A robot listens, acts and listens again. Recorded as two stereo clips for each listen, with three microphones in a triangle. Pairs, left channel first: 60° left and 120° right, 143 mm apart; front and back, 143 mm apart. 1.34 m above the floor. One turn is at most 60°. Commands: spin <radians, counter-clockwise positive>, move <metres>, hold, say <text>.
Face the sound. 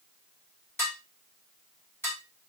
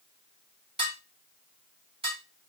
spin 1.05
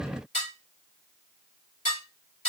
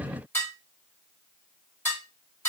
spin 1.05
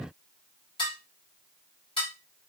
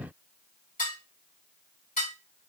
spin 0.17
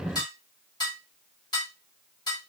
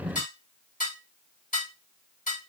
say Facing the dishes clattering.